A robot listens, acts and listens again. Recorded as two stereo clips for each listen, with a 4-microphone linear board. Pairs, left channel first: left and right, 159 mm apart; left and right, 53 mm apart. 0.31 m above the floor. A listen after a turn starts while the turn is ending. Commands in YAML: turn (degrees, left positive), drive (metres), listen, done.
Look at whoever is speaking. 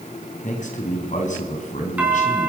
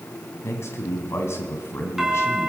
turn: 55
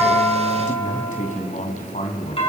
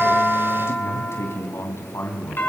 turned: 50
turn: 65
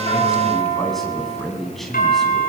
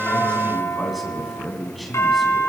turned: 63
done: "Facing the man speaking."